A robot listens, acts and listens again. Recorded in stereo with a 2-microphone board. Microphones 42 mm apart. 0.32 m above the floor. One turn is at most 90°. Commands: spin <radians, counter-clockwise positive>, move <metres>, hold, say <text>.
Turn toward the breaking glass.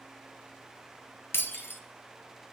spin 1.57
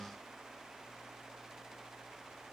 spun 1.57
say Facing where the breaking glass came from. I can't hear it now.